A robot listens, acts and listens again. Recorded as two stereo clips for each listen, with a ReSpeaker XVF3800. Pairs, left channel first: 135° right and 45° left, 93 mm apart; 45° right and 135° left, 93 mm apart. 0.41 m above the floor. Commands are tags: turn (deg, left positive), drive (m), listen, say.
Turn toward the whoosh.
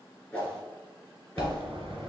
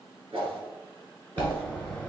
<turn deg="155"/>
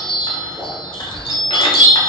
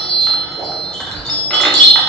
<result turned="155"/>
<listen/>
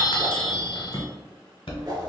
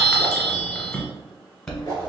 <listen/>
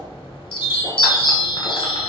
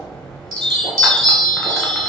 <say>I heard a whoosh from this way, but can't make it out now.</say>